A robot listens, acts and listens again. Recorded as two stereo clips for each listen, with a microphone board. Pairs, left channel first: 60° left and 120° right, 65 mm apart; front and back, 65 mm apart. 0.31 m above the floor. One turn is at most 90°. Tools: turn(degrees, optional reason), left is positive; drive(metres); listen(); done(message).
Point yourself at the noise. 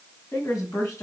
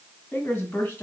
turn(degrees=55, reason="The woman speaking: 55° left.")
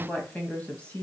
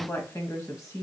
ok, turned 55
done("Facing the woman speaking, 2 to 4 m away.")